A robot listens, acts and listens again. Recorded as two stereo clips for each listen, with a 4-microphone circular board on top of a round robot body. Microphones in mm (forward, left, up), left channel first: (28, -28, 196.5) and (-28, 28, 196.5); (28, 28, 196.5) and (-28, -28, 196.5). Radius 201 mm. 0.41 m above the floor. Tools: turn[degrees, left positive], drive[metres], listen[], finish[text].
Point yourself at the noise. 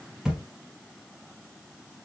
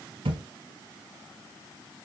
Thought: The thud: 140° right.
Action: turn[-140]
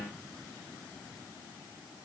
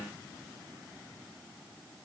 Action: finish[I heard a thud from this way, but can't make it out now.]